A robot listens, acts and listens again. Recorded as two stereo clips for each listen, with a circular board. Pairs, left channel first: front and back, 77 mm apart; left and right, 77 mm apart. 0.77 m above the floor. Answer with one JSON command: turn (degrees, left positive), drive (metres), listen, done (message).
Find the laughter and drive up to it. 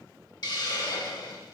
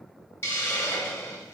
{"listen": true}
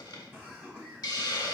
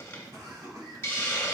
{"turn": -120}
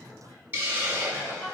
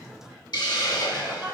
{"turn": -35}
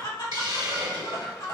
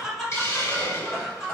{"drive": 1.0}
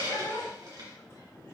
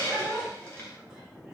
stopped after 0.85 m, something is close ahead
{"turn": -15}
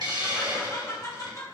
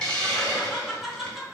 {"done": "Arrived at the laughter, straight ahead."}